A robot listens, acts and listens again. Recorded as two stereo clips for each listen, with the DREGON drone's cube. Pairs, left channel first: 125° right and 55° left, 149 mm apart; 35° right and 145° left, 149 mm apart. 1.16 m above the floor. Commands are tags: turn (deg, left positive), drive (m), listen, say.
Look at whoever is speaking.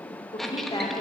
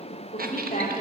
<turn deg="-65"/>
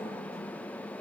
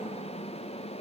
<listen/>
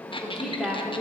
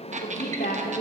<turn deg="-30"/>
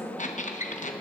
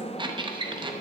<listen/>
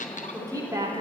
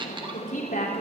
<turn deg="-10"/>
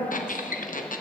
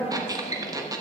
<listen/>
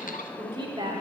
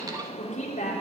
<say>Facing the woman speaking.</say>